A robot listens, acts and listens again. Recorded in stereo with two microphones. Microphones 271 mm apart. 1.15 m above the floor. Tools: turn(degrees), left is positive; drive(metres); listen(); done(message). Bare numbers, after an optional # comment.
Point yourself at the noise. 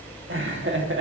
# The laughter: about 45° right or 135° right.
turn(-45)
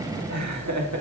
# So it is at 85° right.
turn(-85)
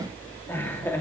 # The laughter is now 10° left.
turn(10)
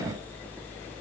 listen()
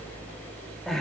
done("Found it: laughter, straight ahead.")